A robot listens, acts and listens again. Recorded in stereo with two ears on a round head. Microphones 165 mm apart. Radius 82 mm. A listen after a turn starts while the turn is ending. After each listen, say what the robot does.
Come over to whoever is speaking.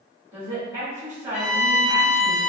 Turn 30° right.
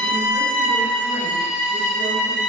Keep listening.
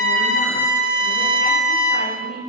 Turn 140° right.
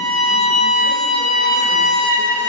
Keep listening.
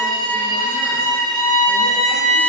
Keep listening.
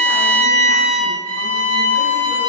Facing where the woman speaking came from. I can't hear it now. I did not reach it.